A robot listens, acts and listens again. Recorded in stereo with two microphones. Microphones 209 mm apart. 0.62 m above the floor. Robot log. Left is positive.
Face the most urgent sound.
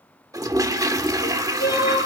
note: The crying: about 50° left or 130° left.
cmd yaw +50
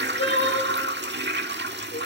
note: So it is at 80° left.
cmd yaw +80
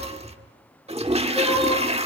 end: Facing the crying, over 4 m away.